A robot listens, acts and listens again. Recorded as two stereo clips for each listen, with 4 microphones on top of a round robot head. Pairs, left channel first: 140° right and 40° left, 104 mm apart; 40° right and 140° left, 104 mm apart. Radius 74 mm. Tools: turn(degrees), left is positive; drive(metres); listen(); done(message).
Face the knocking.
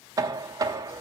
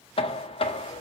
turn(degrees=-15)
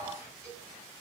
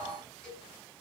listen()
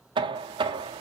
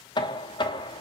done("Facing the knocking.")